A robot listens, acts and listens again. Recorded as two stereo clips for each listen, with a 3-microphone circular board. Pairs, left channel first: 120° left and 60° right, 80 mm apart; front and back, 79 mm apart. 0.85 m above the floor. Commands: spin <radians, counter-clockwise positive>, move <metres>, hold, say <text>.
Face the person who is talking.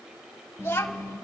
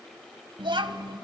spin 3.14
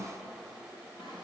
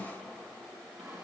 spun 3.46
spin -0.26
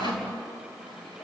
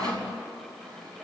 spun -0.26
hold
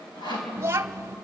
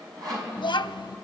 say Facing the child speaking, under 1 m away.